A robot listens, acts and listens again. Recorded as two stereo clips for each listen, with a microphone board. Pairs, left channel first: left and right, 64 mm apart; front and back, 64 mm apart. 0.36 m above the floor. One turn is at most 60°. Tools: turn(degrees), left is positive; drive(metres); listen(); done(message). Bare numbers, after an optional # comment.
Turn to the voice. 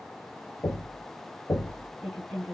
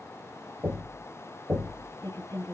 done("Found it: a woman speaking, straight ahead, 2 to 4 m away.")